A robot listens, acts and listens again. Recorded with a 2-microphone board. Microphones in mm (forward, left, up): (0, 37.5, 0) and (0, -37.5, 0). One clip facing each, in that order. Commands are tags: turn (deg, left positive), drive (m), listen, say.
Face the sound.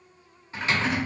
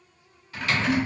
<turn deg="30"/>
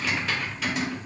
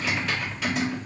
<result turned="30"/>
<say>Found it: typing on a keyboard, straight ahead.</say>